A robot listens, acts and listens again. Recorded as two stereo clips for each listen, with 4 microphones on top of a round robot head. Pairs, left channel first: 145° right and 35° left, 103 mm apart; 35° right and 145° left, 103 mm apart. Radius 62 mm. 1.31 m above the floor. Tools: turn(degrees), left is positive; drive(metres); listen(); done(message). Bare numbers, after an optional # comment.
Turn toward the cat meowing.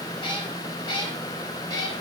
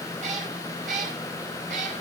# The cat meowing: 160° left.
turn(160)
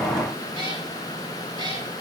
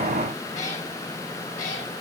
# The cat meowing is now 15° right.
turn(-15)
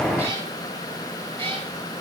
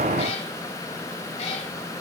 # The cat meowing is now 10° right.
turn(-10)
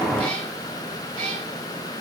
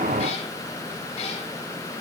done("Found it: a cat meowing, straight ahead.")